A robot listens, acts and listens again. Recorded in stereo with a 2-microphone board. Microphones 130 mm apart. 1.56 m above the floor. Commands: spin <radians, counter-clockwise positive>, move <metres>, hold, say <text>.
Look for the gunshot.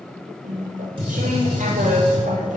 spin -0.79
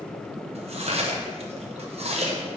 hold
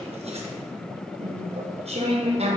say I heard a gunshot, but can't make it out now. It was about straight ahead or 90° right.